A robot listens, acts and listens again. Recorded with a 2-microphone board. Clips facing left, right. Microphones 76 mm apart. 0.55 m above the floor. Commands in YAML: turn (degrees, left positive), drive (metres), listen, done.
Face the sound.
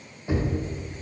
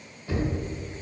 turn: 25
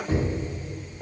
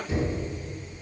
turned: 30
turn: 125
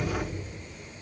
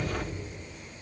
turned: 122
listen: true
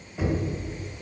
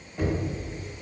done: "Facing the knocking."